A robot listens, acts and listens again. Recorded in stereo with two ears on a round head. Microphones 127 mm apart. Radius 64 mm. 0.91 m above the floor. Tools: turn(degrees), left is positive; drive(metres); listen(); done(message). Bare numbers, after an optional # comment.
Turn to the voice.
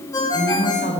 # The woman speaking: about 75° left or 105° left.
turn(75)
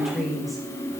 done("Found it: a woman speaking, straight ahead.")